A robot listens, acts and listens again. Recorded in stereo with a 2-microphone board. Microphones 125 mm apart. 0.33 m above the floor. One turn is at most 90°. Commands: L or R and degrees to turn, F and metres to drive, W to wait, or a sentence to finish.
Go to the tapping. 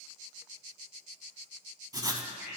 W
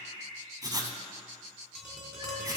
L30
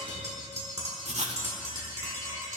R25
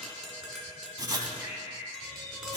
F1.0
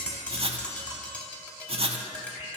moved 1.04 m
L10
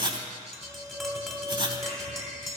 F1.0
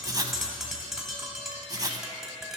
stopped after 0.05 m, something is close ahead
I am next to the tapping.